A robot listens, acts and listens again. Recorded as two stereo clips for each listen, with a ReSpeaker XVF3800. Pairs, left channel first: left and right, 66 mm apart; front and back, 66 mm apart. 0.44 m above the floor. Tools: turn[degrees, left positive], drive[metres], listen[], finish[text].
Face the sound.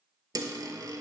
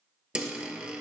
Thought: The dropped coin: 105° right.
Action: turn[-105]
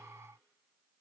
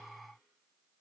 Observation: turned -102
Action: finish[I heard a dropped coin from this way, but can't make it out now.]